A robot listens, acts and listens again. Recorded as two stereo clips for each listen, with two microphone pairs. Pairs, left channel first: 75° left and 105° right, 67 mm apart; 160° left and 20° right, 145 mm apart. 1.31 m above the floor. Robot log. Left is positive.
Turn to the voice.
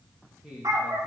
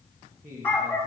note: The man speaking: 30° right.
cmd yaw -30
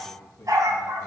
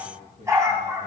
note: The man speaking is now 10° left.
cmd yaw +10
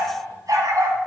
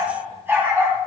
cmd idle
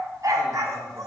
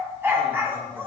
cmd idle
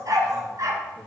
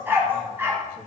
end: Facing where the man speaking came from. I can't hear it now.